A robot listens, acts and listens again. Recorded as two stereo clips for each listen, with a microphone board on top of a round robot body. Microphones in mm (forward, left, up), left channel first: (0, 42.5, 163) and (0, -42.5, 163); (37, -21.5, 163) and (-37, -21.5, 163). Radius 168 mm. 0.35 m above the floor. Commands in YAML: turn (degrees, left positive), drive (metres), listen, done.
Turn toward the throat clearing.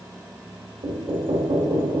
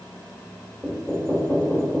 listen: true
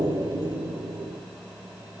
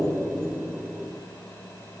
listen: true
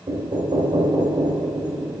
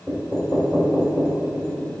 done: "I can't make out throat clearing, only knocking."